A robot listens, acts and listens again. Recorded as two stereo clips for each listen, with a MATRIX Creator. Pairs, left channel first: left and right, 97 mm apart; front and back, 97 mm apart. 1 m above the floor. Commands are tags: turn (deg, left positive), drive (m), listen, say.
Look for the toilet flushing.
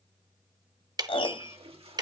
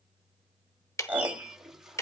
<turn deg="-95"/>
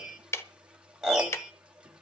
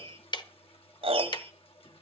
<turn deg="-10"/>
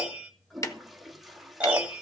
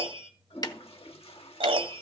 <say>Found it: a toilet flushing, straight ahead, 1 to 2 m away.</say>